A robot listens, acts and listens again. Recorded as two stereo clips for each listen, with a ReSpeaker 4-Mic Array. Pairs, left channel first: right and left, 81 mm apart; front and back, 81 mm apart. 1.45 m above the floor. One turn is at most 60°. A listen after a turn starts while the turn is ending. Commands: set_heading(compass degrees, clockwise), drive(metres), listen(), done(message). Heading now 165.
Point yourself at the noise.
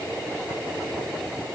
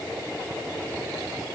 listen()
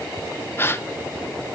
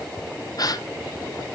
set_heading(195)
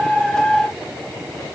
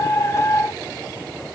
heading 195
done("I heard a gasp from this way, but can't make it out now.")